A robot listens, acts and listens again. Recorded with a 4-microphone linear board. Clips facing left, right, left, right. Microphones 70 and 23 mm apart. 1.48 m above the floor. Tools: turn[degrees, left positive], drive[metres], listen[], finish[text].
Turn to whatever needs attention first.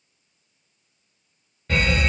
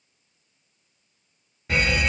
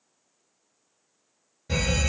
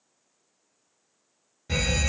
Action: turn[-30]
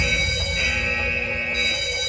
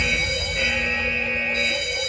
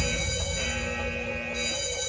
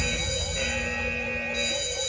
Thought: So it is at 140° right.
Action: turn[-140]
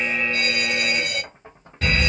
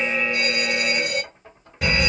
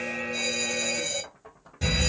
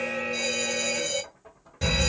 Thought: The fire alarm is now 15° right.
Action: turn[-15]
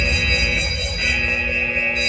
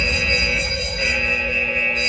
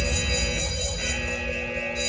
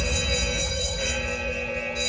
Action: finish[Found it: a fire alarm, straight ahead, 2 to 4 m away.]